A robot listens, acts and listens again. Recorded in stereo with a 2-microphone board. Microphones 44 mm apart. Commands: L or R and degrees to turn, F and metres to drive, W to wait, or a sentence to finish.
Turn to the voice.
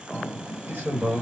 R45
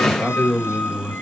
Found it: a man speaking, straight ahead.